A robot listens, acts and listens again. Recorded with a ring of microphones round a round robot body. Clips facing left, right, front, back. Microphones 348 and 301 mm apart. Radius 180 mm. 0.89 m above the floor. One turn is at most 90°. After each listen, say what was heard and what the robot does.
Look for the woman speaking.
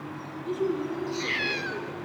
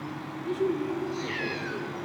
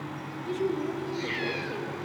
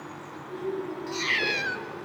The woman speaking: 10° right. Turn 10° right.
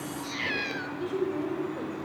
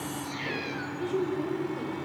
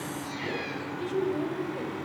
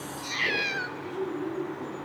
The woman speaking is now 10° right. Turn 10° right.
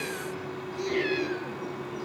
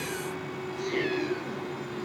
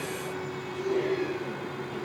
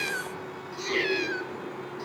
Keep listening.
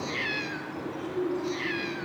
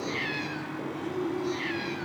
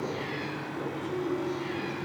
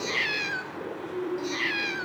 Found it: a woman speaking, straight ahead, over 4 m away.